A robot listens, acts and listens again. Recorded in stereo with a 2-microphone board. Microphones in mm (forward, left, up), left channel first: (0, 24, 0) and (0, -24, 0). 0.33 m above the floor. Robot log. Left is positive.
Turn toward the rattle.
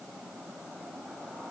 cmd idle
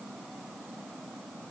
cmd idle
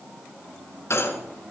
note: The rattle: about 65° left or 115° left.
cmd yaw +65
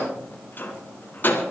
note: So it is at 45° left.
cmd yaw +45
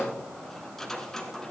note: The rattle is now 10° left.
cmd yaw +10
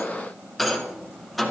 end: Facing the rattle, 2 to 4 m away.